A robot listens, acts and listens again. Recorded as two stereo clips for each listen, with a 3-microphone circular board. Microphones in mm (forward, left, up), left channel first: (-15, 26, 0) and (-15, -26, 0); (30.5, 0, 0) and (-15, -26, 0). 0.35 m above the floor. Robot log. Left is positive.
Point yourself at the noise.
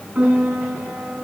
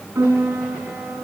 note: The piano: 150° right.
cmd yaw -150
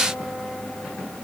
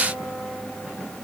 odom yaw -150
cmd idle
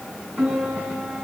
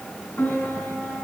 note: The piano is now 25° right.
cmd yaw -25
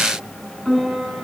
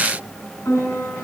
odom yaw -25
end: Found it: a piano, straight ahead, over 4 m away.